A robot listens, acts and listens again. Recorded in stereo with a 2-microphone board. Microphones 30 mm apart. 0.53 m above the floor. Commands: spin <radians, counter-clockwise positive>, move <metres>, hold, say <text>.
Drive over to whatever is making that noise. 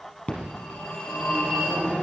spin 0.70
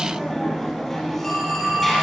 move 1.0
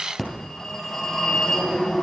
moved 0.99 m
spin 0.17
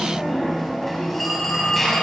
move 1.0
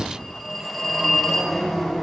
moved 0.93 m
move 1.0
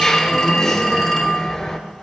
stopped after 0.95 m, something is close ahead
spin 0.26
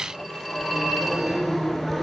say I am next to the phone ringing.